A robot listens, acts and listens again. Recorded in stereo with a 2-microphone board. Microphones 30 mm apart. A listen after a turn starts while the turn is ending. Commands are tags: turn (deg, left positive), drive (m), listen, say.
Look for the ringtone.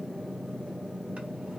<listen/>
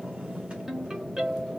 <turn deg="-30"/>
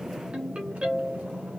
<turn deg="-135"/>
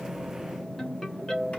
<turn deg="15"/>
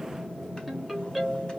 <say>Found it: a ringtone, straight ahead, 2 to 4 m away.</say>